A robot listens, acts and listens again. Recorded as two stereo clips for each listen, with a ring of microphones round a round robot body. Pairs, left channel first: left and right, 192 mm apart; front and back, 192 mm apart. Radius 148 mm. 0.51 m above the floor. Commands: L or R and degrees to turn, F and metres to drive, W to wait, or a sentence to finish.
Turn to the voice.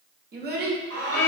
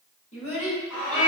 R55
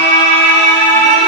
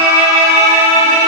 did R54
W
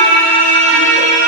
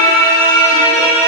W
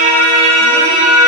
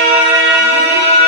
I heard a child speaking from this way, but can't make it out now.